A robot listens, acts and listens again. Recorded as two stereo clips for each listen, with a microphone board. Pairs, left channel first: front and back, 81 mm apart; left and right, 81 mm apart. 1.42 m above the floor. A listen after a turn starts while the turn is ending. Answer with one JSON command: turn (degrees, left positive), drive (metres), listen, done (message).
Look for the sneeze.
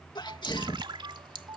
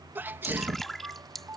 {"turn": -25}
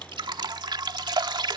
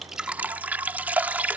{"done": "Facing where the sneeze came from. I can't hear it now."}